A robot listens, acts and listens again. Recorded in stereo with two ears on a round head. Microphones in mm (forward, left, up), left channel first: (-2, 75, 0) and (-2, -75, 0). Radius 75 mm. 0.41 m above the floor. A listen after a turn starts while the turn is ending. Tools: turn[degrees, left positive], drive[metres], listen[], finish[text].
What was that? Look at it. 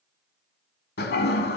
Thought: The toilet flushing: about 65° left or 115° left.
Action: turn[65]
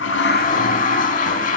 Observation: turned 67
Thought: So it is at 50° left.
Action: turn[50]
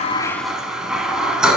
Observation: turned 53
Action: finish[Facing the toilet flushing, under 1 m away.]